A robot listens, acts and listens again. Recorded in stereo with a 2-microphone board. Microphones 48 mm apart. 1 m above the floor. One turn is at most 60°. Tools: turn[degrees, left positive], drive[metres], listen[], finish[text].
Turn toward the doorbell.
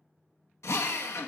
Action: listen[]
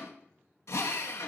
Action: listen[]
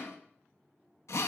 Action: finish[I can't make out a doorbell to turn to.]